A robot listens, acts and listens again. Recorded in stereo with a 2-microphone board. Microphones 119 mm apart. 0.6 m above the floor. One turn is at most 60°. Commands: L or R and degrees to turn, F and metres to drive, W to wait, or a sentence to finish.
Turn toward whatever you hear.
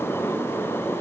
W
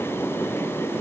W
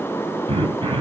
R50
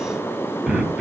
Found it: throat clearing, straight ahead, 2 to 4 m away.